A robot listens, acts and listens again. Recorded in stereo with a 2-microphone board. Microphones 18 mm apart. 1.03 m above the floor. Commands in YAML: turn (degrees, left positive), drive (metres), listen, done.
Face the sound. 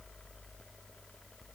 listen: true
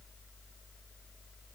listen: true
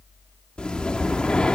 turn: 75
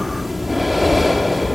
done: "Found it: breathing, straight ahead, 1 to 2 m away."